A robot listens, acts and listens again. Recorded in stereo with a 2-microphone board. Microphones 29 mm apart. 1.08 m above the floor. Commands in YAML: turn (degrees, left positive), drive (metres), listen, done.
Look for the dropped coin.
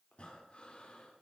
listen: true
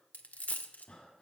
turn: 70
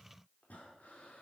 listen: true
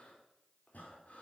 done: "I heard a dropped coin, but can't make it out now. It was about straight ahead or 40° left."